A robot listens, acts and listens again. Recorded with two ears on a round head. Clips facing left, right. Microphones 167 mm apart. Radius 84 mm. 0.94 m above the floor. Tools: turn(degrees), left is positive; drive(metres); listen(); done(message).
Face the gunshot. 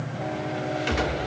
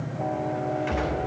turn(degrees=45)
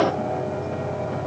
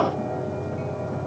listen()
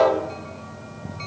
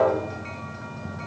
done("I heard a gunshot, but can't make it out now. It was about straight ahead or 90° left.")